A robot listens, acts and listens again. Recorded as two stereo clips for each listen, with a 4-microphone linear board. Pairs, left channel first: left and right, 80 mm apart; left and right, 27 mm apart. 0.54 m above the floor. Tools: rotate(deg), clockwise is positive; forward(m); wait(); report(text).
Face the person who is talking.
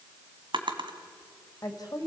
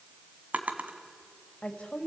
rotate(-50)
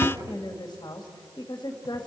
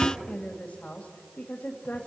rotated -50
rotate(-75)
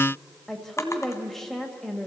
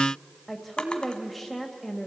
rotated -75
report("Facing the woman speaking.")